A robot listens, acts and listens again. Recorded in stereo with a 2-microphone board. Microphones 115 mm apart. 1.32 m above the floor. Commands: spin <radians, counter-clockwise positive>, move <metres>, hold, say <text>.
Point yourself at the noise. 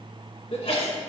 spin 1.13
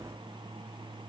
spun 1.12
hold
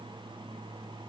say I heard a sneeze, but can't make it out now. It was about 5° left or 50° left.